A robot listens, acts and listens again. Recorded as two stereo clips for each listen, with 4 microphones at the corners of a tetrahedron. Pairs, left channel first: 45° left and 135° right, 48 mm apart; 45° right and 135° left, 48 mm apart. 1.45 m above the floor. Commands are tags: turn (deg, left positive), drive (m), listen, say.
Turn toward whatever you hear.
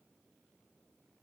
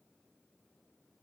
<listen/>
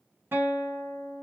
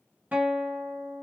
<turn deg="-170"/>
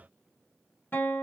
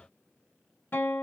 <say>Facing the guitar.</say>